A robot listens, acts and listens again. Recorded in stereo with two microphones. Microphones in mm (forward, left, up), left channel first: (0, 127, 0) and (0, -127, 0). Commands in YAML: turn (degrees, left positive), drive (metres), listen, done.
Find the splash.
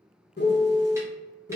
listen: true
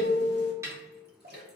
turn: -40
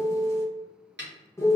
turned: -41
listen: true
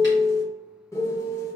done: "I heard a splash, but can't make it out now. It was about straight ahead or 95° right."